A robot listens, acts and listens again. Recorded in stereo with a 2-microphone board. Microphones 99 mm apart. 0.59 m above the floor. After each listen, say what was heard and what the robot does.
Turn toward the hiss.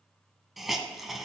Turn 30° left.
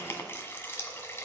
So it is at 155° left. Turn 155° left.
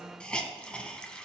The hiss is now 10° left. Turn 10° left.
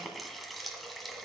Facing the hiss, 1 to 2 m away.